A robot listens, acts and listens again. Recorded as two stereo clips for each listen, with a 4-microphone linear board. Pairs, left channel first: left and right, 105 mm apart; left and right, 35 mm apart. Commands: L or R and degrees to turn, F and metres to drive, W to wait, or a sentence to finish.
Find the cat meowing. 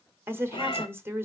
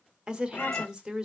L50
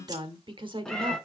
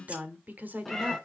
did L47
Found it: a cat meowing, straight ahead.